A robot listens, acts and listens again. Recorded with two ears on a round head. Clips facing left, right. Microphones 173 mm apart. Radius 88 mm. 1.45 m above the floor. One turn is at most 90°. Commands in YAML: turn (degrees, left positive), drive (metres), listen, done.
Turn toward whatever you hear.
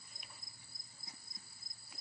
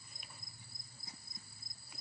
listen: true
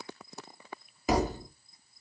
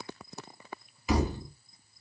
turn: 35
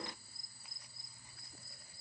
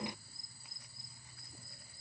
listen: true
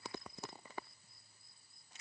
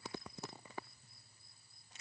done: "I heard a thud, but can't make it out now. It was about straight ahead or 110° left."